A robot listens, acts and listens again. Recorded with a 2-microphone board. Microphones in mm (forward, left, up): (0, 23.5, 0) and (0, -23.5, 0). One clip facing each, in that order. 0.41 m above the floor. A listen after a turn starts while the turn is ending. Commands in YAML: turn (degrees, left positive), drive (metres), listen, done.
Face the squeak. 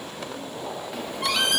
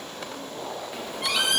turn: -30
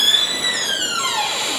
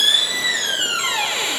turn: -145
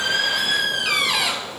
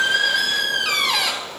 turn: 10
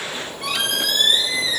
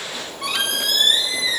done: "Facing the squeak."